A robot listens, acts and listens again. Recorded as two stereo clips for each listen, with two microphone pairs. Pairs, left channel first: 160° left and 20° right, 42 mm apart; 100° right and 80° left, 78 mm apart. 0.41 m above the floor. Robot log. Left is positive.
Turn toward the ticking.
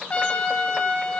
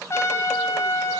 cmd idle
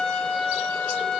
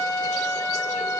cmd idle
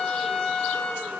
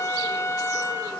end: I can't make out ticking, only a trumpet.